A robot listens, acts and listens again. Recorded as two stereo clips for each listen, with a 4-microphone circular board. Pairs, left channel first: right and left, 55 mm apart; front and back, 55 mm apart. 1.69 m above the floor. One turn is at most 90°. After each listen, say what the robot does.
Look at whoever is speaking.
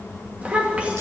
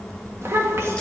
Turn 90° left.
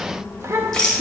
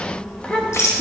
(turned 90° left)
Turn 65° left.
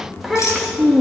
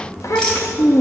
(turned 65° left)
Facing the child speaking, 2 to 4 m away.